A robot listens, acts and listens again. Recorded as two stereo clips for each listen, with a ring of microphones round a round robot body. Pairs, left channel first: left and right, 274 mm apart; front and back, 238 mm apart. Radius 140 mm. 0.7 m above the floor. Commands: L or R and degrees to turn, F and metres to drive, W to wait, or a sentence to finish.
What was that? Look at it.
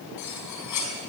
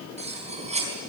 L115
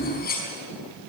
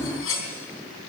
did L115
L30
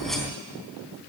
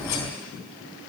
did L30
W
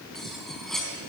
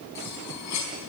Facing the cutlery clinking, over 4 m away.